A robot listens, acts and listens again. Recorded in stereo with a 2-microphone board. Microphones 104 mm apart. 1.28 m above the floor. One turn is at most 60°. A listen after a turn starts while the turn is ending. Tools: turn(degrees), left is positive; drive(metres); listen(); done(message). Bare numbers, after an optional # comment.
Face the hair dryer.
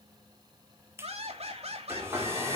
# The hair dryer: about 25° right or 155° right.
turn(-25)
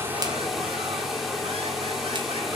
done("Found it: a hair dryer, straight ahead.")